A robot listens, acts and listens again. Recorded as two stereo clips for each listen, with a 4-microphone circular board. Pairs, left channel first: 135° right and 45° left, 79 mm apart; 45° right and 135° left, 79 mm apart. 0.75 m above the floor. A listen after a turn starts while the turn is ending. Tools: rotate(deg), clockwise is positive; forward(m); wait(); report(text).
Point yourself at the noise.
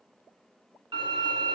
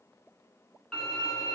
rotate(-40)
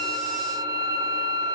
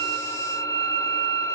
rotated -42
report("Found it: a violin, straight ahead.")